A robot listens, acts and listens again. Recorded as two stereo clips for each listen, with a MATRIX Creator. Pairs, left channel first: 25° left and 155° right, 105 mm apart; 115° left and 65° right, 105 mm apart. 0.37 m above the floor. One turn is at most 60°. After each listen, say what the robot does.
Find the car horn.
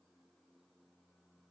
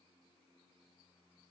Keep listening.
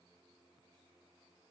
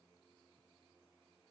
Keep listening.
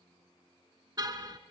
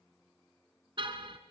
Turn 60° right.
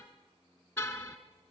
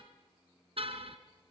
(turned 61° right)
Turn 45° right.
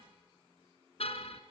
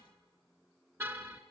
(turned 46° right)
Facing the car horn.